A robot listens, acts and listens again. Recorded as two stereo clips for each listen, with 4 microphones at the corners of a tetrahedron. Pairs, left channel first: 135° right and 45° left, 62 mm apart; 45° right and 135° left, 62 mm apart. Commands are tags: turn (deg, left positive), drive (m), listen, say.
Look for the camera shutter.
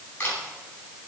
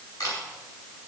<turn deg="-70"/>
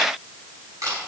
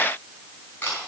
<turn deg="15"/>
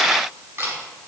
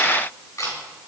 <say>Facing the camera shutter, over 4 m away.</say>